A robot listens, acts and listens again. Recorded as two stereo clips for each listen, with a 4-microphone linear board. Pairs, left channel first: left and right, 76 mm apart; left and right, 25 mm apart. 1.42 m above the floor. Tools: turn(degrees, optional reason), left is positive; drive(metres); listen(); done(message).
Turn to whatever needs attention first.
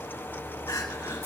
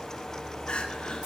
turn(degrees=55, reason="The crying: about 55° left or 125° left.")
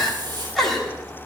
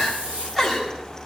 done("Found it: crying, straight ahead.")